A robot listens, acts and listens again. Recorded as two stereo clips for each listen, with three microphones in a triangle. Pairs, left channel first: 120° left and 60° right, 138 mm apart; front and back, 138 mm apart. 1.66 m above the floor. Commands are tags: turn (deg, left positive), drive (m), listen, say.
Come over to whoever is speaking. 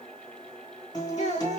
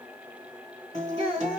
<turn deg="135"/>
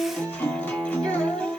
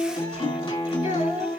<drive m="1.0"/>
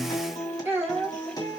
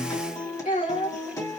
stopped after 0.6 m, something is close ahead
<turn deg="15"/>
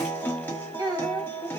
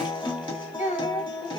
<say>Something is in my way. I am facing the child speaking but have not reached it.</say>